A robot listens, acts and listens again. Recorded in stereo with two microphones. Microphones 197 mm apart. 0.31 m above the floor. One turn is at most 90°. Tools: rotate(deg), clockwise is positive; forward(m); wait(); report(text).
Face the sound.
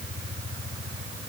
wait()
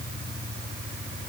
wait()
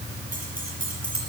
rotate(45)
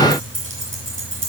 rotate(80)
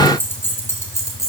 rotate(-15)
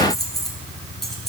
report("Facing the keys jangling, 2 to 4 m away.")